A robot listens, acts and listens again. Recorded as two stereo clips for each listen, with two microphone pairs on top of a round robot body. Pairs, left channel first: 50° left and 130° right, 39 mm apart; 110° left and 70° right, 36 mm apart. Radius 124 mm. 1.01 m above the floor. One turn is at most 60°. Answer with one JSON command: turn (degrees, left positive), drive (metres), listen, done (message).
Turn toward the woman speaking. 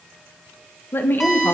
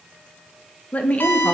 {"turn": 60}
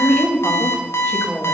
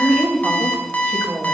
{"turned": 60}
{"turn": -25}
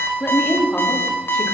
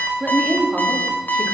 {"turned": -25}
{"turn": -10}
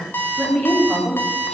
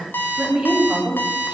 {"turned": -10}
{"done": "Found it: a woman speaking, straight ahead, 2 to 4 m away."}